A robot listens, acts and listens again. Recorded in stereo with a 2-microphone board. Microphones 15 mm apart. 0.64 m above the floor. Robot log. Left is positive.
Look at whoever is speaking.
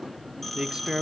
note: The man speaking: about 60° right or 120° right.
cmd yaw -60
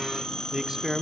note: So it is at 35° right.
cmd yaw -35
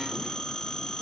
cmd idle
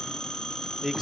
note: The man speaking is now 15° right.
cmd yaw -15
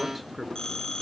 end: Facing the man speaking, under 1 m away.